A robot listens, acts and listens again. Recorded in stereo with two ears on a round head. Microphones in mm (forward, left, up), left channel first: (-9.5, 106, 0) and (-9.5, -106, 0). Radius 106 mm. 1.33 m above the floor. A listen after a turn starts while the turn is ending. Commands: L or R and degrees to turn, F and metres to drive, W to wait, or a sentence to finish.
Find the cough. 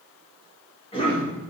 L25
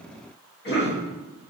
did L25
L130
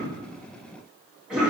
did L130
Found it: a cough, straight ahead, 1 to 2 m away.